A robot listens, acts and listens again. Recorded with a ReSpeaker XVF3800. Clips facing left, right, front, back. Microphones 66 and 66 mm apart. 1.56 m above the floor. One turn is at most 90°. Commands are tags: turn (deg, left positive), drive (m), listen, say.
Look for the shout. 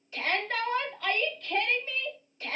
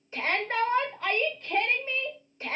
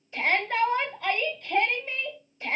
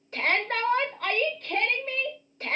<turn deg="-90"/>
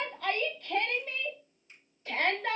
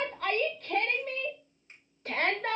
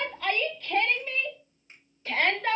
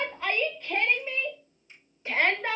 <turn deg="-90"/>
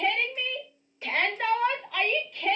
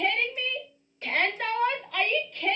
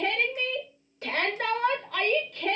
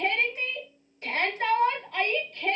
<turn deg="10"/>
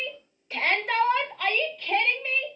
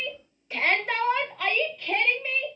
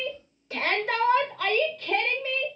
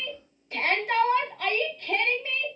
<say>Facing the shout.</say>